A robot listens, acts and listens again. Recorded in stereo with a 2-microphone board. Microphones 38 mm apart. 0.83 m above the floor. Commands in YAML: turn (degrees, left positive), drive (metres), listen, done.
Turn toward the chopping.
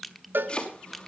turn: 25
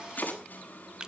turn: 130
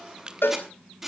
turn: -10
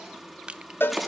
done: "Found it: chopping, straight ahead, over 4 m away."